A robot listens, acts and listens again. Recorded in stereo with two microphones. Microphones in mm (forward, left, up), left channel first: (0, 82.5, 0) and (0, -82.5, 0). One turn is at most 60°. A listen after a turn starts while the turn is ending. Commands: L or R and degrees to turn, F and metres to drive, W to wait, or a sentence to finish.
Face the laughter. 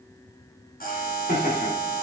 L60
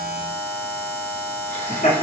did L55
L45
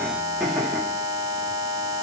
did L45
Facing the laughter, 1 to 2 m away.